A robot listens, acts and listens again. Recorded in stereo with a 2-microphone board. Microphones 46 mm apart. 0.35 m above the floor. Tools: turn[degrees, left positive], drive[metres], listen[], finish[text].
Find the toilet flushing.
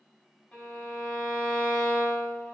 Action: listen[]
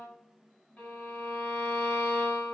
Action: listen[]
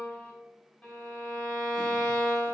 Action: finish[I can't make out a toilet flushing to turn to.]